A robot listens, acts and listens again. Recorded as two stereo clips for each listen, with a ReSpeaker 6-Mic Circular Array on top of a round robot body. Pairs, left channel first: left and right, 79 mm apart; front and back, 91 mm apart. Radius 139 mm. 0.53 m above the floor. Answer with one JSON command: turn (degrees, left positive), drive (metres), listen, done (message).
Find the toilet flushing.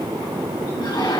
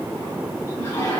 {"turn": 60}
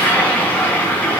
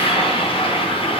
{"turn": 20}
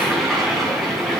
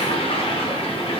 {"done": "Facing the toilet flushing, over 4 m away."}